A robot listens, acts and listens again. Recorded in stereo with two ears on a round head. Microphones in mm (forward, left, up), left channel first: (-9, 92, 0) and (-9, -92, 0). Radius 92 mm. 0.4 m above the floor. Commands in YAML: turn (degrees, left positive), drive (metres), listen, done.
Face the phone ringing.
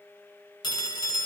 turn: 20
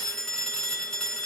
done: "Facing the phone ringing, 1 to 2 m away."